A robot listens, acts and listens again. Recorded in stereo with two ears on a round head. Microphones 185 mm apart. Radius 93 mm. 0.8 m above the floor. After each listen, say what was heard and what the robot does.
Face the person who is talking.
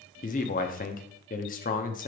The man speaking: about 40° left or 140° left. Turn 40° left.
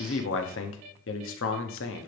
So it is at 95° left. Turn 95° left.
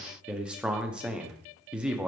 Found it: a man speaking, straight ahead, under 1 m away.